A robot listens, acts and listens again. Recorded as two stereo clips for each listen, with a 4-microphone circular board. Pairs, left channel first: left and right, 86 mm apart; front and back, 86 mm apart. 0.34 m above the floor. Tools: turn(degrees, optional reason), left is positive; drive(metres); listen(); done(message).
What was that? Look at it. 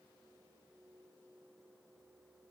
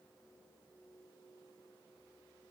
listen()
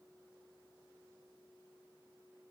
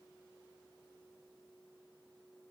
listen()
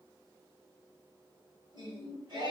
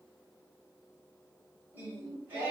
turn(degrees=-110, reason="The singing: 110° right.")
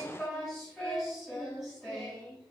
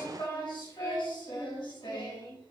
done("Facing the singing, 2 to 4 m away.")